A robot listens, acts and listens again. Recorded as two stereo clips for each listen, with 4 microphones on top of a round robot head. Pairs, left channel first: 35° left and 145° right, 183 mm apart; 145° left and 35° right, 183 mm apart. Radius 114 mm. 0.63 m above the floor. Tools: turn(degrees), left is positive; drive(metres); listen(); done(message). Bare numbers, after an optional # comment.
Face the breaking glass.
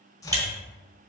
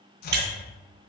# The breaking glass: 70° right.
turn(-70)
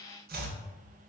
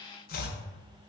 done("I heard breaking glass from this way, but can't make it out now.")